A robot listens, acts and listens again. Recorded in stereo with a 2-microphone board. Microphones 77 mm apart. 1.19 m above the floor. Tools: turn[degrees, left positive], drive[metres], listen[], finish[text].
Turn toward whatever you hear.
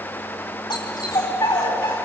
Action: turn[90]
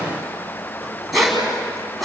Action: finish[Facing the dog barking.]